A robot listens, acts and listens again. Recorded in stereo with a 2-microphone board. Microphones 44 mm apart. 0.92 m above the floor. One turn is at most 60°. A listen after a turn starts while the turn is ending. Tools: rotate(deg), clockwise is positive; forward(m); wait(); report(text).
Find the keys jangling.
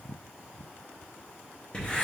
wait()
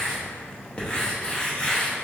wait()
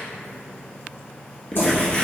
rotate(-60)
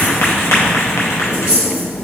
rotate(-60)
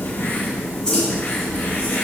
rotate(-20)
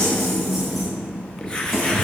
report("Facing the keys jangling, 1 to 2 m away.")